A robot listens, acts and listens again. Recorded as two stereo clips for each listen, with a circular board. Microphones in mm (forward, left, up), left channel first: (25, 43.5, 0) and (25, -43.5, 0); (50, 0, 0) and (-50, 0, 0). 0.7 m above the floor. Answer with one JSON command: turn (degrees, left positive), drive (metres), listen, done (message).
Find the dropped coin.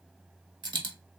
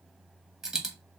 {"turn": -95}
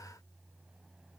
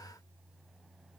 {"done": "Facing where the dropped coin came from. I can't hear it now."}